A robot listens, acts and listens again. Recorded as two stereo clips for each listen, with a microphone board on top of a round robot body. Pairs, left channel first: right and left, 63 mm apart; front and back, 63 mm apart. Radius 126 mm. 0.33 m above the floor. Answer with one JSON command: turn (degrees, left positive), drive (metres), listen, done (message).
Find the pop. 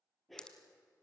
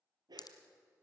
{"turn": -10}
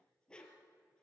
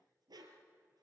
{"done": "Facing where the pop came from. I can't hear it now."}